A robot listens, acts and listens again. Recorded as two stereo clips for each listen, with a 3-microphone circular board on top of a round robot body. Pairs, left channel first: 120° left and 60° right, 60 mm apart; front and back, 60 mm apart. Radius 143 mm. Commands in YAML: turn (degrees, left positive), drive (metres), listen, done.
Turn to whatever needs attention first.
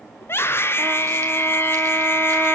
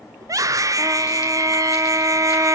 turn: 165
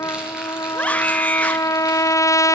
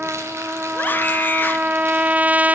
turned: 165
turn: 55
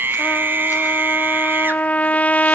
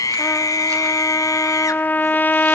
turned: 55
turn: -10
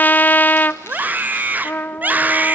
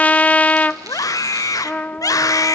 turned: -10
done: "Found it: a scream, straight ahead."